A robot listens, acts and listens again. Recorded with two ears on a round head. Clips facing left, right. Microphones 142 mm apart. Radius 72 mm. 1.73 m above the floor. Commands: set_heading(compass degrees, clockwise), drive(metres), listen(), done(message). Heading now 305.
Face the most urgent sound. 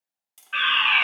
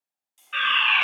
set_heading(335)
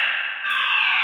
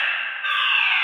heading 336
set_heading(121)
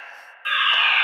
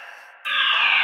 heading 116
done("Facing the fire alarm, 1 to 2 m away.")